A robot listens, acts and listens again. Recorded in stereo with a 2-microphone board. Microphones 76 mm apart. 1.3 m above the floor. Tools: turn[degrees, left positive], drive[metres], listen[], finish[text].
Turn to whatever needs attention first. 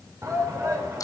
Thought: The shout: about 45° right or 135° right.
Action: turn[-45]
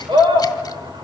Thought: So it is at 90° right.
Action: turn[-90]
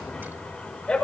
Thought: The shout is now 10° left.
Action: turn[10]
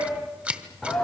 Action: finish[Found it: a shout, straight ahead.]